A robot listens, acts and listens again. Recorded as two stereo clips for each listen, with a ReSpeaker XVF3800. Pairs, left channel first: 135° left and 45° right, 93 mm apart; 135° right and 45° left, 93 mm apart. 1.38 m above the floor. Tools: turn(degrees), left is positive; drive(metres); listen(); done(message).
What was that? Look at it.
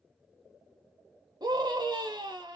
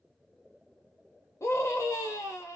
turn(degrees=-80)
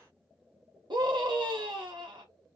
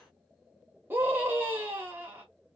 turn(degrees=-20)
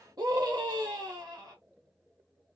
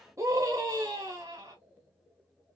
done("Facing the scream, under 1 m away.")